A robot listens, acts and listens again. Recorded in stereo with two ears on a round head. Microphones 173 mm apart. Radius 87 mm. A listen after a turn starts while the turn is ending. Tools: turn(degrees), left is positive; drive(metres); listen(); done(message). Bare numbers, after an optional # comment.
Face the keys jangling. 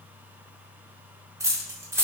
turn(-30)
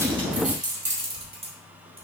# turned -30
# So it is at 150° right.
turn(-150)
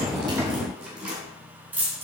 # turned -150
# The keys jangling is now 10° right.
turn(-10)
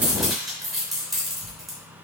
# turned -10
done("Found it: keys jangling, straight ahead, 2 to 4 m away.")